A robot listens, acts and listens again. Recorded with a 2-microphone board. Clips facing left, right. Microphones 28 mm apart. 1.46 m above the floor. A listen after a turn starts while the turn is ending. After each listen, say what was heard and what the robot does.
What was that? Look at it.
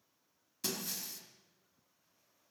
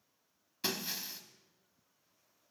The breaking glass: about 25° right or 155° right. Turn 25° right.
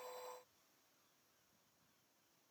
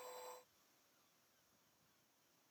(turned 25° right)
Keep listening.
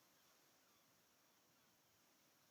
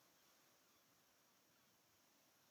I heard breaking glass, but can't make it out now. It was about straight ahead or 130° right.